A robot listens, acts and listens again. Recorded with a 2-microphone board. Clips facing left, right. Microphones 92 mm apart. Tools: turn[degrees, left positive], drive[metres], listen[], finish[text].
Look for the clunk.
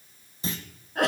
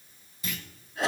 Thought: The clunk: about 30° left or 150° left.
Action: turn[30]
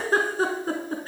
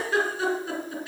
Action: listen[]
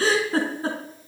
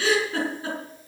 Action: finish[I heard a clunk, but can't make it out now. It was about straight ahead or 120° left.]